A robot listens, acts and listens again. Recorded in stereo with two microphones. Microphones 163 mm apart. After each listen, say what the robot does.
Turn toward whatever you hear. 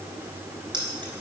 Turn 30° right.
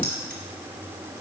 Keep listening.
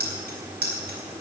Turn 105° right.
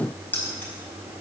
Turn 10° left.
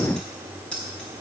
Found it: keys jangling, straight ahead, over 4 m away.